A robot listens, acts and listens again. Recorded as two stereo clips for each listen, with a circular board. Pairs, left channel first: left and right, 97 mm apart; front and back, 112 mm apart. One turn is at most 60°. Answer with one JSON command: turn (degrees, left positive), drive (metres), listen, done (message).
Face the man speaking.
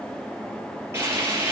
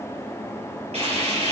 {"listen": true}
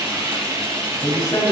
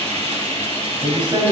{"turn": 60}
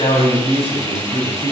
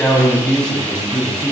{"turn": 60}
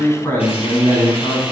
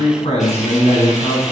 {"turn": 30}
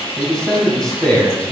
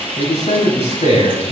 {"done": "Found it: a man speaking, straight ahead, over 4 m away."}